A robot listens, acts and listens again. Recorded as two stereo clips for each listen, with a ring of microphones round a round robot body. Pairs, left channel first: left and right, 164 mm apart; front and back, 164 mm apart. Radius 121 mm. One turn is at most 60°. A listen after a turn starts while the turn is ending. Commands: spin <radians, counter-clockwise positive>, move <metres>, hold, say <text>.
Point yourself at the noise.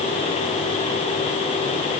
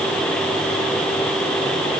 hold
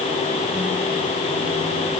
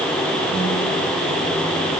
hold
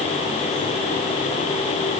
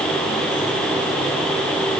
say I can't make out anything.